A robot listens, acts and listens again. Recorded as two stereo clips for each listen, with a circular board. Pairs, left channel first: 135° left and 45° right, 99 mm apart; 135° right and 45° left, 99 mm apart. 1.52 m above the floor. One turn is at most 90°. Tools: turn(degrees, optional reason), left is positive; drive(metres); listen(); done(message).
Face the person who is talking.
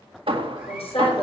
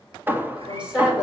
turn(degrees=90, reason="The woman speaking: 125° left.")
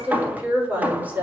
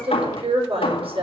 turn(degrees=30, reason="The woman speaking is now 30° left.")
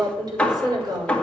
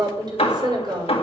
done("Facing the woman speaking.")